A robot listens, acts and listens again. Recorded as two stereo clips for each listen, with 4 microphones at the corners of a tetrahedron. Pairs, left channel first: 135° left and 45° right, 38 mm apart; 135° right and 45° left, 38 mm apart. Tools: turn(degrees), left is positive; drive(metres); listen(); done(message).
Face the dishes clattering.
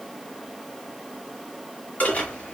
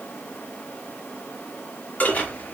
turn(degrees=180)
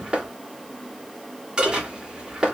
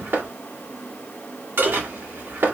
turn(degrees=20)
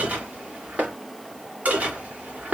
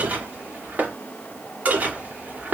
done("Found it: dishes clattering, straight ahead, 2 to 4 m away.")